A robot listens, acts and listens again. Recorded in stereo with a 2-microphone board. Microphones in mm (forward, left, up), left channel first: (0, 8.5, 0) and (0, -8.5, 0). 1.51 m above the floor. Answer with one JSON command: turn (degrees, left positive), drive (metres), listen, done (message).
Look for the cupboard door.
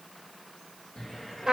{"turn": 45}
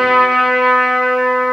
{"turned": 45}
{"listen": true}
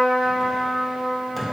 {"done": "Facing the cupboard door, 1 to 2 m away."}